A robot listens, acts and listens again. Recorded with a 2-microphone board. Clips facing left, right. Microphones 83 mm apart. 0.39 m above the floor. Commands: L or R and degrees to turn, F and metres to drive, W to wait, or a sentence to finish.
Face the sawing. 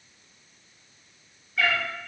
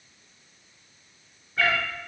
W
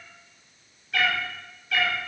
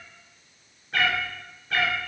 W
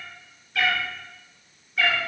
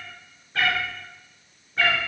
I can't make out sawing, only a cat meowing.